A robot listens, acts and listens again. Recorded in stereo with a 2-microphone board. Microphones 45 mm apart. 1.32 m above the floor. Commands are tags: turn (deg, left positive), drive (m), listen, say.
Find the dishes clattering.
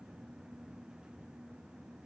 <listen/>
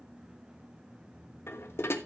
<turn deg="70"/>
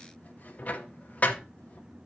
<turn deg="35"/>
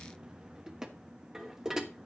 <turn deg="-15"/>
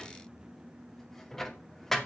<say>Facing the dishes clattering.</say>